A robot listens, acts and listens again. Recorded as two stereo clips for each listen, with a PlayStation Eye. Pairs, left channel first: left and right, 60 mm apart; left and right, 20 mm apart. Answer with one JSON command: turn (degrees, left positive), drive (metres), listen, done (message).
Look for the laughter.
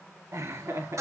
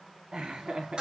{"turn": -55}
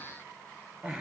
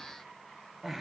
{"turn": -20}
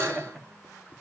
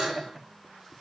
{"done": "Found it: laughter, straight ahead, 1 to 2 m away."}